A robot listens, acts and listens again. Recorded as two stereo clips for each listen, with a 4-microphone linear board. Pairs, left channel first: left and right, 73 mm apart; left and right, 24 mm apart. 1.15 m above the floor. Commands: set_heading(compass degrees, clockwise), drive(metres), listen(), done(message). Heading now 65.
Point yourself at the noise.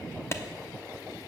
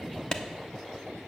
set_heading(30)
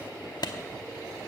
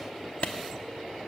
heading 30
set_heading(285)
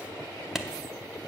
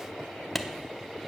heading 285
done("Found it: a clap, straight ahead.")